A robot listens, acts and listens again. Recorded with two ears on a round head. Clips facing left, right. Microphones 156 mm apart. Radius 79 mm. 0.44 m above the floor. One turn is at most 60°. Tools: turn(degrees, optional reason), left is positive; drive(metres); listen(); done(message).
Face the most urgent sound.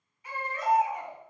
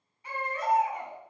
turn(degrees=-30, reason="The baby crying: about 30° right or 150° right.")
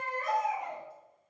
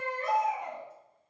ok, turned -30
done("Found it: a baby crying, straight ahead.")